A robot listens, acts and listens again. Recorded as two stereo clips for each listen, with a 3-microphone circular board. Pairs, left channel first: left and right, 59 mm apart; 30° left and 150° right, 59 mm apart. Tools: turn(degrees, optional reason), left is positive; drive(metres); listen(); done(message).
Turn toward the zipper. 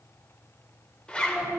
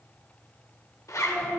turn(degrees=20, reason="The zipper: 20° left.")
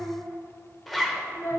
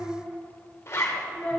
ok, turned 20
done("Found it: a zipper, straight ahead.")